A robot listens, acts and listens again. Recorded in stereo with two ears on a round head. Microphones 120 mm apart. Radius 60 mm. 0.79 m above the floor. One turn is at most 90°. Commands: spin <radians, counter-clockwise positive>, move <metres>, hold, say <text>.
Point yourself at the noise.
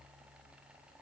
hold
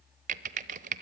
spin -1.05
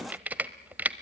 spin -0.17
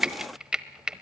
say Facing the typing on a keyboard, under 1 m away.